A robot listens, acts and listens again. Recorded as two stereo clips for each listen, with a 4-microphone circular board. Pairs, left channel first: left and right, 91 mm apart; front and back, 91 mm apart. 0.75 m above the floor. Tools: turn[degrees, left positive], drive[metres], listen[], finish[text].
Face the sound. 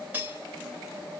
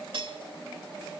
Thought: The cutlery clinking: 160° right.
Action: turn[-160]
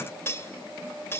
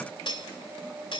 Thought: The cutlery clinking is now 25° left.
Action: turn[25]
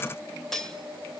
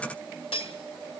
Action: finish[Facing the cutlery clinking.]